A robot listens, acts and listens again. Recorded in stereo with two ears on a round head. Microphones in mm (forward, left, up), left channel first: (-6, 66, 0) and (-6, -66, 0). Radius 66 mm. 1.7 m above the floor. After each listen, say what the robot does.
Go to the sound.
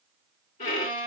Turn 50° left.
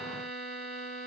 Drive 1.0 m forward.
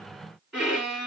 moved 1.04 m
Drive 1.0 m forward.
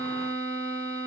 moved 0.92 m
Turn 10° left.
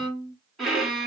Drive 1.0 m forward.
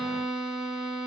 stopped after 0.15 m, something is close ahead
I am next to the violin.